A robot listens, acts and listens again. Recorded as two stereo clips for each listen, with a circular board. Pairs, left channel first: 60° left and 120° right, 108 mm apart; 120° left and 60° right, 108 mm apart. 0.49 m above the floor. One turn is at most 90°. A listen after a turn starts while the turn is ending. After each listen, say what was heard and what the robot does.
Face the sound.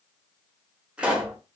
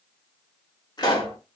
The pop: 160° left. Turn 90° left.
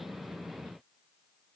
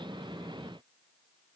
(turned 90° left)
Nothing new. It was at 70° left. Turn 70° left.
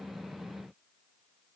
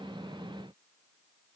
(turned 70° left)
I heard a pop from this way, but can't make it out now.